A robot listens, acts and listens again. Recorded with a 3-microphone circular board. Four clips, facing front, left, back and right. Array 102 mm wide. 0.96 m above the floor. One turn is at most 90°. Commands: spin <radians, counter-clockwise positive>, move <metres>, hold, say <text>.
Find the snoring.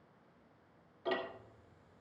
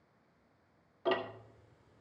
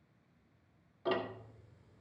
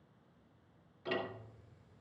hold
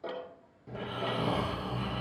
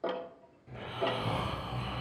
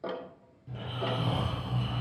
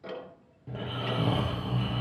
spin -1.05
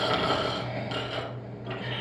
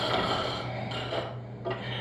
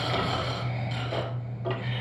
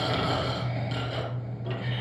spin -0.26
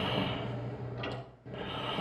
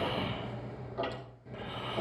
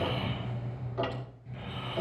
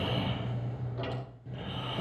say Facing the snoring, 2 to 4 m away.